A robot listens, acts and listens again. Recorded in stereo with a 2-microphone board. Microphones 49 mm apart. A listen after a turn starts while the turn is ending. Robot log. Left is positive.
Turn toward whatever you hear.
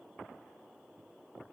cmd idle
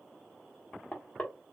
note: The knocking: about 25° left or 155° left.
cmd yaw +25
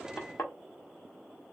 note: So it is at 130° left.
cmd yaw +130
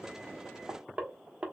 note: The knocking is now 25° right.
cmd yaw -25
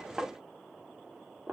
note: The knocking is now 15° right.
cmd yaw -15
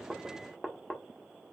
end: Found it: knocking, straight ahead, 1 to 2 m away.